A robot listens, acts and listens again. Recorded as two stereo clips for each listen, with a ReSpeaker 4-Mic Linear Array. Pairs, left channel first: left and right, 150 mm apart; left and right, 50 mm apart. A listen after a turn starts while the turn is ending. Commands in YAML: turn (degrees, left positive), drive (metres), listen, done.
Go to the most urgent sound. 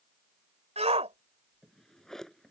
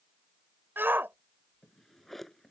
turn: -45
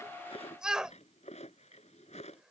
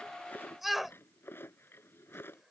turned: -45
drive: 1.0
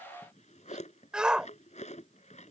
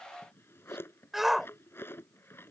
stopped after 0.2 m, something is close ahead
done: "Something is in my way. I am facing the shout but have not reached it."